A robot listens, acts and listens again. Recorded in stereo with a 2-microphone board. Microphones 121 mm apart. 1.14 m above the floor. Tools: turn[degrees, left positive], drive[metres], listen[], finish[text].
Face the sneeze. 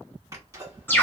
Thought: The sneeze: about 25° right or 155° right.
Action: turn[-25]
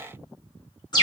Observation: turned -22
Action: listen[]
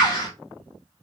Action: finish[I heard a sneeze, but can't make it out now. It was about 5° right or 130° right.]